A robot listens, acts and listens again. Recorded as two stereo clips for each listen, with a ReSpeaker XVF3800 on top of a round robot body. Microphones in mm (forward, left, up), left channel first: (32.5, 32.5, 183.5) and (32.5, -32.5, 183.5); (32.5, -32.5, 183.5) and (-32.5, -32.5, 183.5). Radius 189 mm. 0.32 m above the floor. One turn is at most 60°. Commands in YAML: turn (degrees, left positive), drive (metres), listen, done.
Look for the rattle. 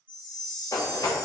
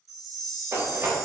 turn: 60
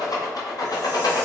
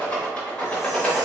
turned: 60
turn: 60
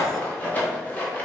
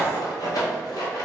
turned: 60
turn: 20
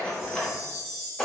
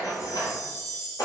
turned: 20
turn: 10
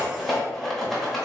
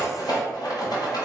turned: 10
done: "Found it: a rattle, straight ahead."